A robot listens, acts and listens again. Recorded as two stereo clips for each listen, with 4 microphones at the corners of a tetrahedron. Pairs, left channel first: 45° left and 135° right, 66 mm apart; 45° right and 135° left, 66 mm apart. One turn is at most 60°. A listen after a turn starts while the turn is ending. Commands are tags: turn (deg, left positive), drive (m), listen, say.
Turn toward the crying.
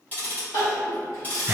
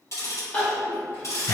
<turn deg="25"/>
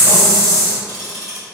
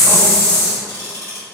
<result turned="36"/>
<turn deg="-10"/>
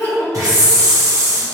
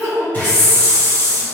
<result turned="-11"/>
<say>Facing the crying.</say>